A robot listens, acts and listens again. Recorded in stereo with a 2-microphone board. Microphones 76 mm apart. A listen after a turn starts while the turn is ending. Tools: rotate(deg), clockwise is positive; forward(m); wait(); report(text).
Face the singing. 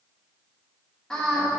rotate(-30)
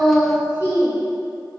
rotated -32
rotate(-145)
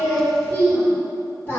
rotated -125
rotate(-30)
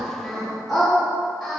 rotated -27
report("Facing the singing.")